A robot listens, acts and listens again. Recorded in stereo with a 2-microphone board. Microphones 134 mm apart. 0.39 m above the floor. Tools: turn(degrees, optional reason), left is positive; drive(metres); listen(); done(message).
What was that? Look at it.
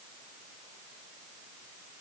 listen()
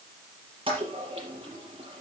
turn(degrees=-40, reason="The toilet flushing: about 40° right or 140° right.")
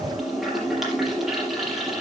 done("Found it: a toilet flushing, straight ahead, over 4 m away.")